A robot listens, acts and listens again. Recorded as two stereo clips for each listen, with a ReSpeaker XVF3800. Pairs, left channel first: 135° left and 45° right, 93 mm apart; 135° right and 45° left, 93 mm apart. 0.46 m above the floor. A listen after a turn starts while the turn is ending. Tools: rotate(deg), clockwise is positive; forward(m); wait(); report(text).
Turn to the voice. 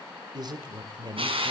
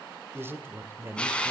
rotate(15)
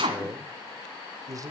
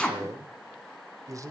report("Found it: a man speaking, straight ahead, 1 to 2 m away.")